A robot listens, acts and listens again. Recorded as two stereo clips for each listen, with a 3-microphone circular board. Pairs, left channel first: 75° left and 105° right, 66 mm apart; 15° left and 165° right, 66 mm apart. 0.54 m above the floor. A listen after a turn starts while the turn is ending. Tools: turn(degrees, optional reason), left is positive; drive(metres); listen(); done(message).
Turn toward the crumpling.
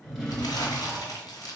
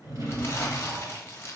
turn(degrees=65, reason="The crumpling: 65° left.")
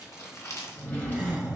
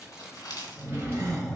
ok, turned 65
turn(degrees=40, reason="The crumpling is now 40° left.")
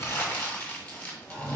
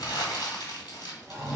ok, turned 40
turn(degrees=15, reason="The crumpling is now 15° left.")
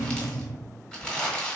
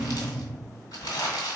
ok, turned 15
done("Found it: crumpling, straight ahead.")